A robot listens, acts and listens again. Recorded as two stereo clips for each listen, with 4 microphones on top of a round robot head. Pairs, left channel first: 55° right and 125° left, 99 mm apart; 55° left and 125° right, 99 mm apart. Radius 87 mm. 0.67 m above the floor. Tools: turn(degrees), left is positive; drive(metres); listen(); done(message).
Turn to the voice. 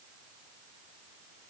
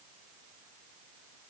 listen()
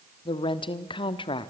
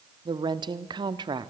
turn(degrees=-85)
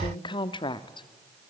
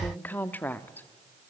turn(degrees=-20)
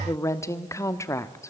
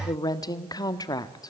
done("Found it: a woman speaking, straight ahead, 1 to 2 m away.")